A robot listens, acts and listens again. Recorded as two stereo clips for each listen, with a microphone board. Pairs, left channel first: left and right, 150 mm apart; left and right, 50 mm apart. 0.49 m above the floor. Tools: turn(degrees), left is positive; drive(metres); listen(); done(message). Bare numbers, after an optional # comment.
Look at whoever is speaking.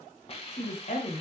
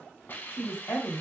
# The woman speaking: about 60° left or 120° left.
turn(60)
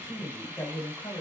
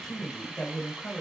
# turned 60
# So it is at 20° left.
turn(20)
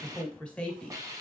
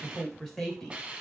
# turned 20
# The woman speaking is now 10° left.
turn(10)
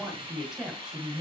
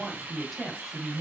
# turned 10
done("Facing the woman speaking.")